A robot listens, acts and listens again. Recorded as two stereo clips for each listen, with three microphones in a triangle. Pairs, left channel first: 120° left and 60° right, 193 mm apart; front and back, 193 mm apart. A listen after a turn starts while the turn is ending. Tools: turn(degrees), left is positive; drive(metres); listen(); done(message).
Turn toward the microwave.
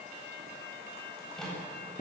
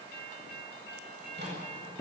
turn(degrees=-155)
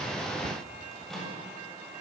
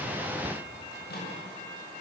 turn(degrees=30)
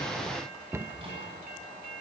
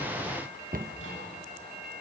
listen()
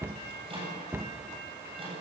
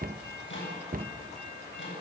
done("Found it: a microwave, straight ahead, over 4 m away.")